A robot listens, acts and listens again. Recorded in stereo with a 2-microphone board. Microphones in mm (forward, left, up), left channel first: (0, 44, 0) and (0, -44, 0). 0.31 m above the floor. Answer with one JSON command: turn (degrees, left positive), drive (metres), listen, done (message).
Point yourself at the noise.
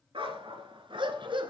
{"turn": -70}
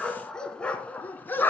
{"turn": 25}
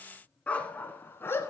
{"turn": 30}
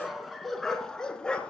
{"turn": 10}
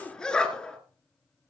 {"turn": 10}
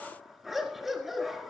{"done": "Found it: a dog barking, straight ahead, 1 to 2 m away."}